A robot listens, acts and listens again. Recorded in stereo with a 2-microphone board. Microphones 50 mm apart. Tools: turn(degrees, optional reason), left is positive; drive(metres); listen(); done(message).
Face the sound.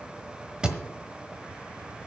turn(degrees=-20, reason="The thud: about 20° right or 160° right.")
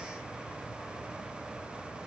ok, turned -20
listen()
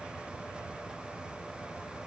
done("I heard a thud, but can't make it out now. It was about straight ahead or 140° right.")